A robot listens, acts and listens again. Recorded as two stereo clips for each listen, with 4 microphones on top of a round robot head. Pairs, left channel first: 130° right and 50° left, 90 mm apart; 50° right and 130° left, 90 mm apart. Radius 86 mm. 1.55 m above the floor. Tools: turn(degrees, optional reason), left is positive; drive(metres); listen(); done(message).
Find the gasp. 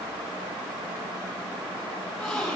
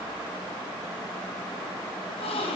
turn(degrees=-45, reason="The gasp: 45° right.")
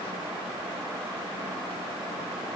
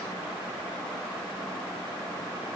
done("I heard a gasp from this way, but can't make it out now.")